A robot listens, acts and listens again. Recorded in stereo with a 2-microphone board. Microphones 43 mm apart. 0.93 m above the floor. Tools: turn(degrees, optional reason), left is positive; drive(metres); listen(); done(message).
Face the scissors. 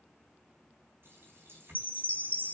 listen()
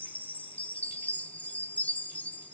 listen()
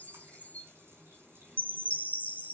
done("I can't make out scissors to turn to.")